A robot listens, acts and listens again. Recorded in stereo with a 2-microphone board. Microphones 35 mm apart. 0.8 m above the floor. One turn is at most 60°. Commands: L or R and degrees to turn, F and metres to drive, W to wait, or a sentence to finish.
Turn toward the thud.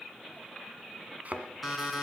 R40
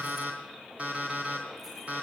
W
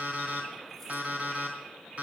I heard a thud, but can't make it out now. It was about straight ahead or 100° right.